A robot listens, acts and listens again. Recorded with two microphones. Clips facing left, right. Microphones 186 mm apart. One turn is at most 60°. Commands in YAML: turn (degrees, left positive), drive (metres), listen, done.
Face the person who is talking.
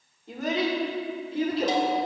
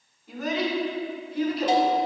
turn: 30
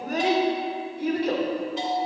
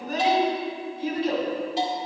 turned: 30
turn: 60
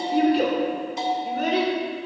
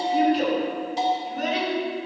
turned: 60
turn: 60
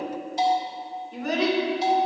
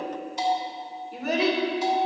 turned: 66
done: "Found it: a child speaking, straight ahead, 2 to 4 m away."